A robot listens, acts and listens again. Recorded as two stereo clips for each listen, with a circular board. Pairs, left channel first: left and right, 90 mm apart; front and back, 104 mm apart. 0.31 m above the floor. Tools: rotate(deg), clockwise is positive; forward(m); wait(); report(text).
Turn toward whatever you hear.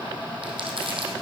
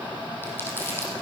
rotate(70)
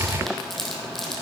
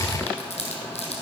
report("Facing the crumpling.")